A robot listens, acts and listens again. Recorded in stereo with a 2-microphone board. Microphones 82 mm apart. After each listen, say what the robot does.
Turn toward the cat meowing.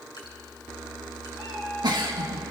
Turn 30° left.
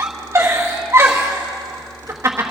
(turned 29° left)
Keep listening.
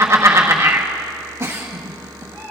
Turn 145° left.
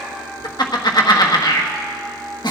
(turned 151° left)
Found it: a cat meowing, straight ahead.